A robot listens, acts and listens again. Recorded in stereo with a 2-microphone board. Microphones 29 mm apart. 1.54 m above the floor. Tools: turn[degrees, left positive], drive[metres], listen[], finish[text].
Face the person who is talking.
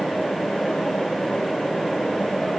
Action: listen[]
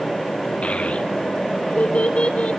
Thought: The child speaking: about 40° left or 140° left.
Action: turn[40]
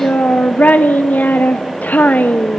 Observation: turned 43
Thought: So it is at 90° left.
Action: turn[90]
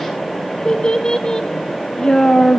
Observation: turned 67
Thought: The child speaking is now 25° left.
Action: turn[25]
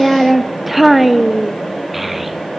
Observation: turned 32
Action: finish[Facing the child speaking.]